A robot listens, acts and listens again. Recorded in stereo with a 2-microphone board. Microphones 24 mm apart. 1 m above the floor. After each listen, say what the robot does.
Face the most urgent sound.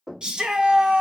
Turn 35° right.
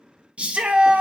Turn 105° right.
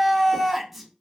Facing the shout, under 1 m away.